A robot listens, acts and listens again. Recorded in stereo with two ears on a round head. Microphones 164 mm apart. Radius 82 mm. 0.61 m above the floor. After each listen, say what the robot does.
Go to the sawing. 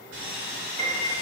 Turn 65° right.
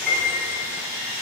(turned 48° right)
Turn 55° right.
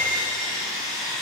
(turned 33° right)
Turn 20° right.
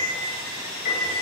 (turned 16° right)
Drive 1.0 m forward.
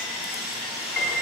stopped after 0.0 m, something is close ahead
Something is in my way. I am facing the sawing but have not reached it.